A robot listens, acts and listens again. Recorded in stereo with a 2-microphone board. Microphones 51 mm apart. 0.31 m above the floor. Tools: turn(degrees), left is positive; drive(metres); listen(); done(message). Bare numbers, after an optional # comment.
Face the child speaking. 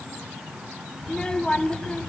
# The child speaking: about 20° left or 160° left.
turn(20)
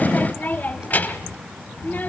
# So it is at 135° left.
turn(135)
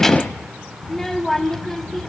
done("Facing the child speaking, under 1 m away.")